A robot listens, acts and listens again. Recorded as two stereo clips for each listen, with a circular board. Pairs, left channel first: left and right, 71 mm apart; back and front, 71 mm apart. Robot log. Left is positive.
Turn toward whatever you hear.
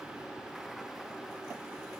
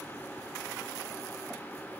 cmd idle
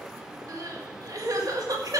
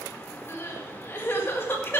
note: The crying: 120° right.
cmd yaw -120
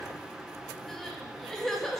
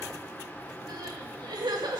end: Found it: crying, straight ahead, 1 to 2 m away.